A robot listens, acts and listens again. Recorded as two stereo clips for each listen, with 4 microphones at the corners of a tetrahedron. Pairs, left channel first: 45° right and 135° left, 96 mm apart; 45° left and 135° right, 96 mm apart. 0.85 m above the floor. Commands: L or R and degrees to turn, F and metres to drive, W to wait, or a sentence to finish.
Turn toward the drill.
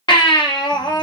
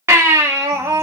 W
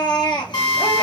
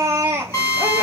R15
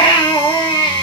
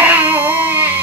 W
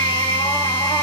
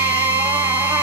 Found it: a drill, straight ahead, 2 to 4 m away.